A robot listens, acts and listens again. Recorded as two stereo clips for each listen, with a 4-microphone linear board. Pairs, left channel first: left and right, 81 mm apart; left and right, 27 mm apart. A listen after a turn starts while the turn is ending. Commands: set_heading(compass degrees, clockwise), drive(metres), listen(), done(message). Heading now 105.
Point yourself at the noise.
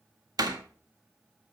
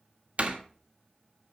set_heading(160)
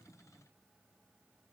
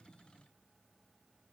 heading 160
listen()
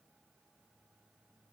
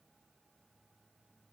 done("I heard a door slam, but can't make it out now. It was about straight ahead or 70° right.")